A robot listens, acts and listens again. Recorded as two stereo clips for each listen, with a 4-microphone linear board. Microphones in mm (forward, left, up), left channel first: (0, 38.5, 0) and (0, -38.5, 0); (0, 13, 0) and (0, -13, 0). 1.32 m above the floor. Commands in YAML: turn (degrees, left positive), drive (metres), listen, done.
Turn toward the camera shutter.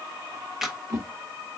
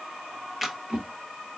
turn: -30
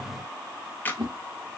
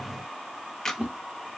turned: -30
turn: 25
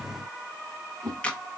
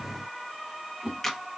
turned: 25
turn: 15
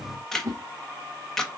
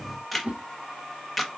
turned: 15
done: "Found it: a camera shutter, straight ahead."